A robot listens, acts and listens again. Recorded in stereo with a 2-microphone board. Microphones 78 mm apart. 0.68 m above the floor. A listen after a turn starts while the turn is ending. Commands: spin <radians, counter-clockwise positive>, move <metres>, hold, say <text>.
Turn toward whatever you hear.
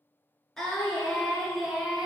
spin -0.52
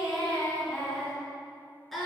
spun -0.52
spin 0.52
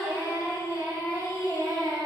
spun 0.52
spin -0.79
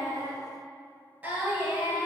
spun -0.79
spin -0.26
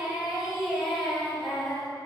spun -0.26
say Found it: singing, straight ahead.